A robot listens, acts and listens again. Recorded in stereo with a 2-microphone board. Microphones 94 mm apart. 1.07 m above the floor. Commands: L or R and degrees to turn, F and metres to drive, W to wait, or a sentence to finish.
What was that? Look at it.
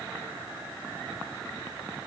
W
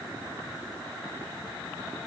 W
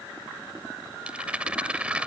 R30
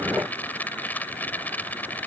L20
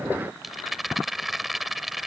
Found it: a rattle, straight ahead.